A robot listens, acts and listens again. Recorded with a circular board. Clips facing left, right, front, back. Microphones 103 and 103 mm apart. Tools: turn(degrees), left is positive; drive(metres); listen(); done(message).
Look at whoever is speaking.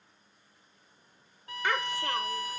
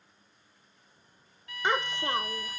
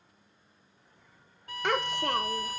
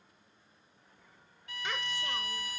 turn(degrees=-25)
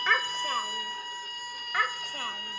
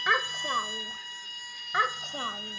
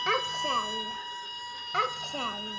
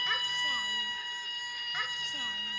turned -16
turn(degrees=-25)
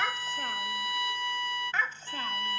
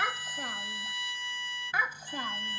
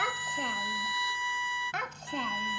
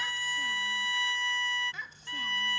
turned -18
turn(degrees=-15)
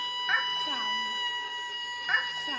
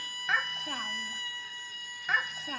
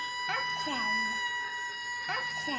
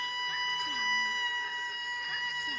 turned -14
done("Facing the child speaking.")